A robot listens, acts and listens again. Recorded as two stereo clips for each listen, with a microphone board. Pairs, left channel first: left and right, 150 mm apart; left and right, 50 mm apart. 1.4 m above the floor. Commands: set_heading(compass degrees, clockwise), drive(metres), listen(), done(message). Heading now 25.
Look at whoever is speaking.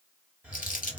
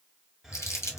listen()
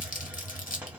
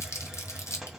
listen()
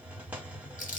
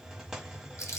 done("I can't make out anyone speaking, only crumpling and a hiss.")